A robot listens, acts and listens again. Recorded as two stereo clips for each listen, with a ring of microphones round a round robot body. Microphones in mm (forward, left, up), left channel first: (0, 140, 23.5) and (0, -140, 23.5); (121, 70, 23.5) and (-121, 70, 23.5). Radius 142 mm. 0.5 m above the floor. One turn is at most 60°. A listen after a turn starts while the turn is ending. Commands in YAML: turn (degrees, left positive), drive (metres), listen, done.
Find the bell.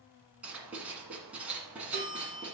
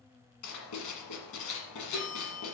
turn: -55
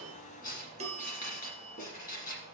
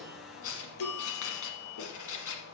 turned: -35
turn: -20
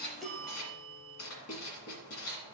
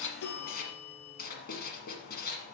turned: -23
done: "Found it: a bell, straight ahead, 1 to 2 m away."